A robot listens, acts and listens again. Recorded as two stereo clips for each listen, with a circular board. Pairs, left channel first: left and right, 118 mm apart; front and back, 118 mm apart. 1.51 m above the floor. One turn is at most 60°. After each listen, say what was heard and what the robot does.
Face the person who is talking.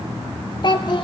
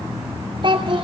The child speaking: 135° left. Turn 60° left.
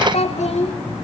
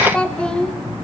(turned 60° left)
The child speaking is now 80° left. Turn 60° left.
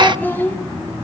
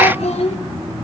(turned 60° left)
The child speaking is now 20° left. Turn 20° left.
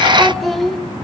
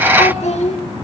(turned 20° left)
Facing the child speaking, 2 to 4 m away.